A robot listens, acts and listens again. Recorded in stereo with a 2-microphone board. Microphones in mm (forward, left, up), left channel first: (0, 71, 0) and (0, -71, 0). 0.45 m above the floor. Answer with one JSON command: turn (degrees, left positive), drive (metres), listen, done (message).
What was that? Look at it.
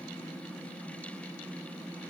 {"listen": true}
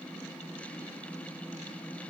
{"listen": true}
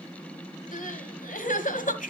{"turn": 70}
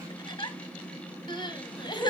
{"turn": 35}
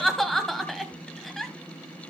{"done": "Facing the crying."}